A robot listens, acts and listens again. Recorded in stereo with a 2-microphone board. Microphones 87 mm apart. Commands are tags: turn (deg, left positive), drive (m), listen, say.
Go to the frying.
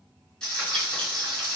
<turn deg="30"/>
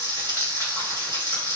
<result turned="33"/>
<turn deg="145"/>
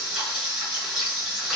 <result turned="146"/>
<drive m="1.0"/>
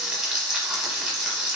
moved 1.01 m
<drive m="1.0"/>
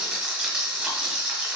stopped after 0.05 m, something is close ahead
<turn deg="-10"/>
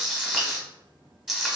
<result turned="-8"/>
<say>I am next to the frying.</say>